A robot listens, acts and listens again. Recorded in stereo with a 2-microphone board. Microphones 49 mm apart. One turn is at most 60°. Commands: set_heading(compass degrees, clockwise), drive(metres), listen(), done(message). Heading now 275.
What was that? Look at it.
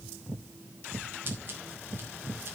listen()
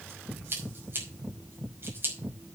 set_heading(320)
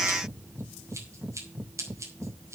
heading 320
set_heading(20)
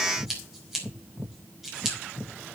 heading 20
done("Found it: scissors, straight ahead.")